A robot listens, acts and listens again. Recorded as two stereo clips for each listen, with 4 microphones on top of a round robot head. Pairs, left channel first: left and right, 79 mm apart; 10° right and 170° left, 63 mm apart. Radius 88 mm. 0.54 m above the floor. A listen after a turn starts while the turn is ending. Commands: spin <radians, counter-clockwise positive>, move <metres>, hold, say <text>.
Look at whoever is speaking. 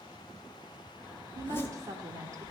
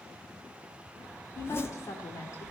spin -0.79
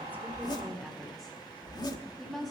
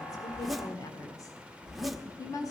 say Facing the woman speaking, 1 to 2 m away.